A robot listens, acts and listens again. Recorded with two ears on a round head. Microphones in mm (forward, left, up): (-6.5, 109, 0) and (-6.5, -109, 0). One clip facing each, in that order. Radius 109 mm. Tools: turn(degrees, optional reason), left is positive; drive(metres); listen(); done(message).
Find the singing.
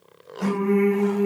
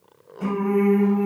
turn(degrees=-30)
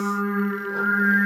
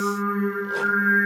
turn(degrees=25, reason="So it is at 25° left.")
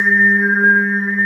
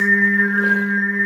done("Found it: singing, straight ahead.")